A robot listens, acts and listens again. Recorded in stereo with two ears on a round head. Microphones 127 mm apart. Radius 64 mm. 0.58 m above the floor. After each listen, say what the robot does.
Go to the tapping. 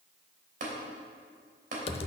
Turn 60° right.
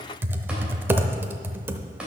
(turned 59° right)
Keep listening.
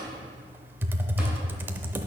Keep listening.
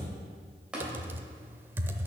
Drive 1.0 m forward.
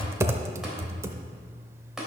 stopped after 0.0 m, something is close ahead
Something is in my way. I am facing the tapping but have not reached it.